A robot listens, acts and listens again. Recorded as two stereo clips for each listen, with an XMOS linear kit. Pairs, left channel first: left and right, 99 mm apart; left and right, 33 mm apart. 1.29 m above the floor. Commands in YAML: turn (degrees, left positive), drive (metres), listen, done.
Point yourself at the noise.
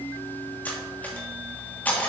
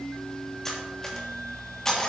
turn: 15
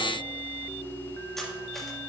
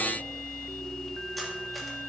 listen: true
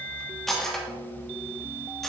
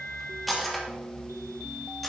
done: "Facing the cutlery clinking."